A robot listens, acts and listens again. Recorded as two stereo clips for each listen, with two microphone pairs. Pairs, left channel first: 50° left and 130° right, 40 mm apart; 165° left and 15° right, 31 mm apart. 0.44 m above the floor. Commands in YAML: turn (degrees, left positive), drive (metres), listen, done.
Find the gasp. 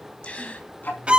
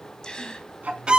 turn: 105
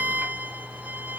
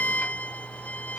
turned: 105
done: "Facing where the gasp came from. I can't hear it now."